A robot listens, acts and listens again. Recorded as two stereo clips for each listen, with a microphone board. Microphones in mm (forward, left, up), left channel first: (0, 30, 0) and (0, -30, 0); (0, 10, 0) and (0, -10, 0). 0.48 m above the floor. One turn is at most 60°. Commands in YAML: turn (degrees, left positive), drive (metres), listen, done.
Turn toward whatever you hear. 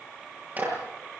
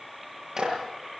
turn: -30
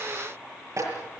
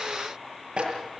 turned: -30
turn: -60
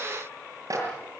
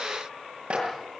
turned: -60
turn: -60
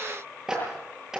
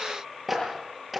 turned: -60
done: "Facing the clap, over 4 m away."